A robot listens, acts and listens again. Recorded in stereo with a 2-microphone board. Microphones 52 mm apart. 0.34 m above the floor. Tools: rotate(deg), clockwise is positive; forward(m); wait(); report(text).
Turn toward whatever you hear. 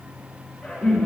rotate(-30)
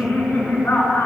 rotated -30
rotate(-135)
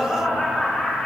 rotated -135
rotate(-25)
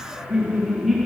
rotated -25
report("Found it: laughter, straight ahead, over 4 m away.")